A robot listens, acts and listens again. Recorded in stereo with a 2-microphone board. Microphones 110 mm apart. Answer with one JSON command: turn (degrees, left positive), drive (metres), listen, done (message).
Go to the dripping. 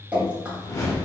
{"turn": -30}
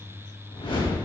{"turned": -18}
{"listen": true}
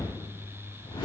{"listen": true}
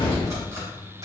{"done": "I heard dripping, but can't make it out now. It was about 5° left or 150° right. I did not reach it."}